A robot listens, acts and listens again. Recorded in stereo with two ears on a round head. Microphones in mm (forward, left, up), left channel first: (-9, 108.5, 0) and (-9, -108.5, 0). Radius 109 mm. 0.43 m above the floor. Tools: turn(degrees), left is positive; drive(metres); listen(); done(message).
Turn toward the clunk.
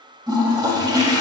listen()
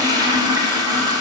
listen()
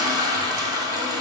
done("I can't make out a clunk, only a toilet flushing.")